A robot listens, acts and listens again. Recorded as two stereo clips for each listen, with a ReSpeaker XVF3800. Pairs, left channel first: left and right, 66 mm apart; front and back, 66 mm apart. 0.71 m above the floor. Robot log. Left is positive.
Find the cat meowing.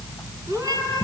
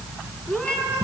note: The cat meowing: 70° right.
cmd yaw -70
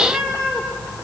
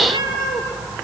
note: The cat meowing is now 15° left.
cmd yaw +15
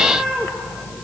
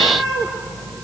note: The cat meowing is now 10° left.
cmd yaw +10
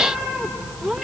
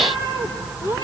note: The cat meowing is now 10° left.
cmd yaw +10
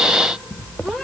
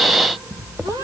end: Facing the cat meowing.